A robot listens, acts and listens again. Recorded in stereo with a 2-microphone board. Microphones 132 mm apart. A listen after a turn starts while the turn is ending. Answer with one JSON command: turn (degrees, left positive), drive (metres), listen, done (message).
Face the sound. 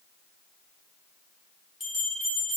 {"turn": 30}
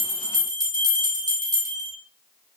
{"turn": -35}
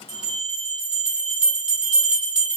{"turn": -10}
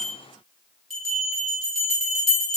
{"done": "Found it: a bell, straight ahead."}